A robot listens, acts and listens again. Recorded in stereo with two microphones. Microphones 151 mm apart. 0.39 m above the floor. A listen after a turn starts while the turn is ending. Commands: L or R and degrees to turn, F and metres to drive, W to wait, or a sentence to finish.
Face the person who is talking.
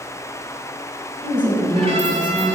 R30
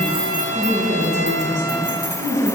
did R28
R120
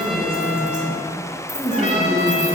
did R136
L20
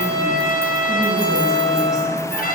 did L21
W
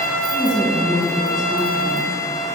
Found it: a woman speaking, straight ahead, 2 to 4 m away.